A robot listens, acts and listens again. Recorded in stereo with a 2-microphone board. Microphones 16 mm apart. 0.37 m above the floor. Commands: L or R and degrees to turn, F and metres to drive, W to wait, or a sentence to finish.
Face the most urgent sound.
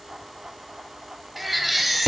L30
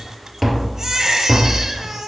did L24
R25
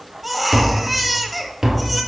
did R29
Facing the baby crying.